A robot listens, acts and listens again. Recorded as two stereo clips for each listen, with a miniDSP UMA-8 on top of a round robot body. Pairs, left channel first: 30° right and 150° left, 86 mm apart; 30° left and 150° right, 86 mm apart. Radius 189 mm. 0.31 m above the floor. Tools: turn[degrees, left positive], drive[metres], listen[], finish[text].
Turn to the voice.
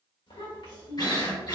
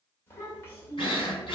Thought: The child speaking: 30° right.
Action: turn[-30]
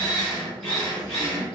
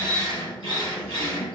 Action: listen[]
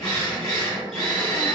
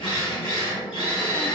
Action: listen[]
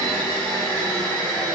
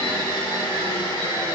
Action: finish[I heard a child speaking from this way, but can't make it out now.]